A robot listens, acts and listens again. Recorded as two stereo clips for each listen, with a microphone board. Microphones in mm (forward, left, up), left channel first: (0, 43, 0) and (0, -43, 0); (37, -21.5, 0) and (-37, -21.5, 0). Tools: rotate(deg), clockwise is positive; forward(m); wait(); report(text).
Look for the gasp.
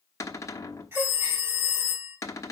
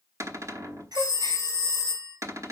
rotate(155)
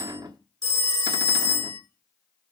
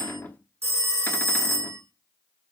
report("Facing where the gasp came from. I can't hear it now.")